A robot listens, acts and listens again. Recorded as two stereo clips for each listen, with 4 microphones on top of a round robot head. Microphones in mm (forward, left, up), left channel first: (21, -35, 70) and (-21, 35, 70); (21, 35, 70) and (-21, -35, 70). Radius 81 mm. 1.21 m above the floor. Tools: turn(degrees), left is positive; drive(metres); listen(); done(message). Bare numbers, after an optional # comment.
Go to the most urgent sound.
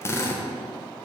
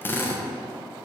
listen()
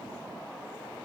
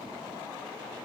listen()
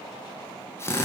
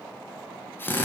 done("I can't make out anything urgent to turn to.")